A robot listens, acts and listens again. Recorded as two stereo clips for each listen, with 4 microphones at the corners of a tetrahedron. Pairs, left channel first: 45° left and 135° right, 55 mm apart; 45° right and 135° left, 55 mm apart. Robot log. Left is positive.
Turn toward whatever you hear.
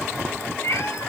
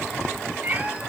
note: The cat meowing: 75° left.
cmd yaw +75
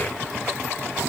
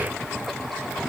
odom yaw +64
note: Nothing new. It was at 10° left.
cmd yaw +10
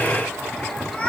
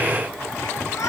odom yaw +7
note: The cat meowing is now 25° right.
cmd yaw -25
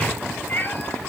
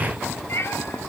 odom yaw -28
note: The cat meowing is now 10° right.
cmd yaw -10
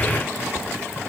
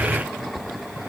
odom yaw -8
cmd idle
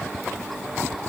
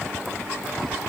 cmd idle
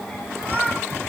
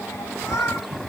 note: The cat meowing is now 20° right.
cmd yaw -20
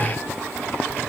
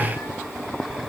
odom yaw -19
cmd idle
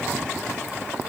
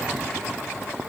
cmd idle
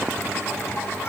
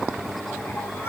end: I heard a cat meowing from this way, but can't make it out now.